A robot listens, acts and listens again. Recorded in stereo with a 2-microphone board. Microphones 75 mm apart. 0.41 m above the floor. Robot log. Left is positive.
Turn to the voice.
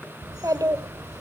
note: The child speaking: about 55° right or 125° right.
cmd yaw -55
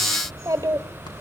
note: So it is at 55° right.
cmd yaw -55
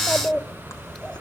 note: The child speaking is now 10° left.
cmd yaw +10
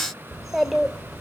end: Found it: a child speaking, straight ahead, 1 to 2 m away.